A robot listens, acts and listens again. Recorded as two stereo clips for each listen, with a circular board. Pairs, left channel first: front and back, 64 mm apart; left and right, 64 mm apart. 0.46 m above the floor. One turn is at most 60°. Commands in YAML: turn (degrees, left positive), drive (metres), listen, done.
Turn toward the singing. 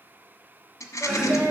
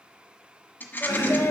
turn: 60
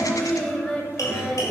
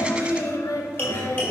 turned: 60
turn: 60
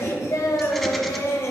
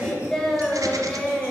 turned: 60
turn: 10
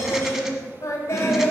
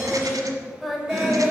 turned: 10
done: "Found it: singing, straight ahead."